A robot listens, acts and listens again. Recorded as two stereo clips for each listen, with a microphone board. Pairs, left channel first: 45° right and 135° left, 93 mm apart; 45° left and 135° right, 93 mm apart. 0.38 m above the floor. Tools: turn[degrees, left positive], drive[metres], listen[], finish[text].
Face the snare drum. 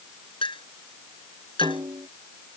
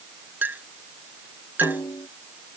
Thought: The snare drum: 95° left.
Action: turn[95]
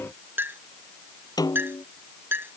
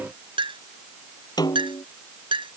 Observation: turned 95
Action: finish[Found it: a snare drum, straight ahead.]